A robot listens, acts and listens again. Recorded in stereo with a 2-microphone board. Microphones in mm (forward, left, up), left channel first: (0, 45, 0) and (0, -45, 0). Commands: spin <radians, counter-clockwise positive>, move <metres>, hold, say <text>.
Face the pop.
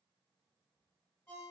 hold
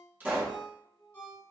spin -0.44
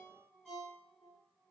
hold
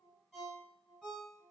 say I heard a pop, but can't make it out now. It was about straight ahead or 130° right.